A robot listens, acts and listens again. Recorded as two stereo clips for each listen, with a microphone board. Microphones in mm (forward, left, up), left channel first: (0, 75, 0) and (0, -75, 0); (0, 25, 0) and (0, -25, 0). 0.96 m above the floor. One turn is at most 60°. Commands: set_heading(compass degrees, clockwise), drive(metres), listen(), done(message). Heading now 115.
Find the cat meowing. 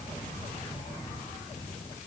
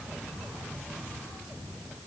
listen()
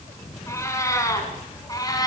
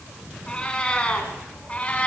set_heading(90)
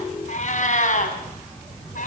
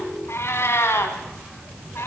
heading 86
set_heading(26)
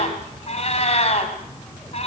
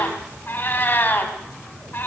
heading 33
set_heading(343)
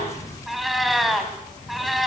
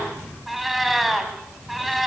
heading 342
done("Found it: a cat meowing, straight ahead, 2 to 4 m away.")